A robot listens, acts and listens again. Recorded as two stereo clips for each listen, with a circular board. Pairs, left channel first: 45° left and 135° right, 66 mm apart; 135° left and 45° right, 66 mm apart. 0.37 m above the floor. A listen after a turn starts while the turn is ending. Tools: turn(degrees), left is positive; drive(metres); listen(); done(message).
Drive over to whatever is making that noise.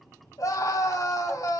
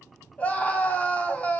turn(degrees=70)
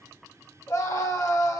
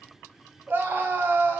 turn(degrees=10)
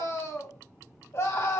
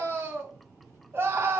drive(metres=1.0)
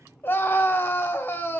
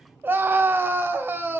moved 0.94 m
drive(metres=1.0)
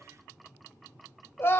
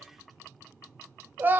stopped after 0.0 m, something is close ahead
done("Arrived at the scream, straight ahead.")